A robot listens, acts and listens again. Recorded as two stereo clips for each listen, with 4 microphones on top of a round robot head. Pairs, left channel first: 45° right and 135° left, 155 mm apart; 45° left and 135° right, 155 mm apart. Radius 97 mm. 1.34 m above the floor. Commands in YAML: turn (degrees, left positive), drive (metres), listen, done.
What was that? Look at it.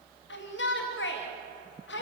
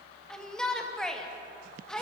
turn: -40
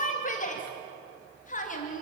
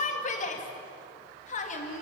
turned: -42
done: "Facing the shout, 2 to 4 m away."